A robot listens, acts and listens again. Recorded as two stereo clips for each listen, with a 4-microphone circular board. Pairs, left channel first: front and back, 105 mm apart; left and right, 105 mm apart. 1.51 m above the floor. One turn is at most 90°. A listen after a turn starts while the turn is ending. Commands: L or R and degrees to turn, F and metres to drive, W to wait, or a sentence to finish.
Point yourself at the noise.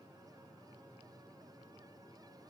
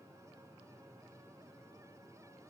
W
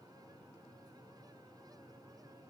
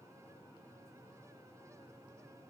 W
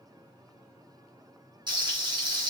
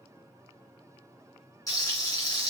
L90
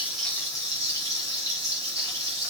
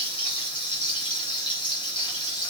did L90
L55
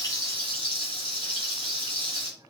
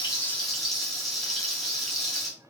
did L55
Facing the frying.